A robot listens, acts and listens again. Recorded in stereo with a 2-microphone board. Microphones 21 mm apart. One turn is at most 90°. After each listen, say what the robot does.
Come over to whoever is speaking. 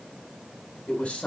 Turn 60° left.
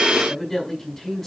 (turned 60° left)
Drive 1.0 m forward.
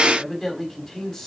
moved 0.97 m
Drive 1.0 m forward.
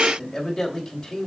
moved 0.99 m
Turn 10° left.
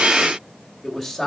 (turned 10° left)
Drive 1.0 m forward.
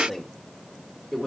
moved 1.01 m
Drive 1.0 m forward.
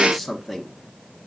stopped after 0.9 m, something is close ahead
Arrived at the man speaking, straight ahead.